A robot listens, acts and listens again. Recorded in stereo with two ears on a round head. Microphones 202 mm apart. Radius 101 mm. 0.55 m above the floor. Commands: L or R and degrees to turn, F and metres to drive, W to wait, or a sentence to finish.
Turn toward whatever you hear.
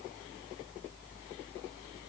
W
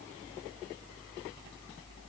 W
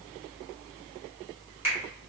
R30
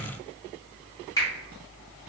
L20
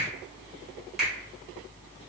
Found it: a finger snap, straight ahead, 1 to 2 m away.